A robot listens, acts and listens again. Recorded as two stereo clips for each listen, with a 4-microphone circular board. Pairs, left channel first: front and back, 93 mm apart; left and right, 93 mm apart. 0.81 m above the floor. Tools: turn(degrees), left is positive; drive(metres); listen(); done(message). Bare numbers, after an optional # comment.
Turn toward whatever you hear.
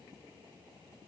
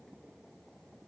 listen()
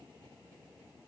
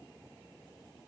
listen()
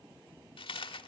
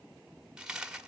done("Found it: a dropped coin, straight ahead.")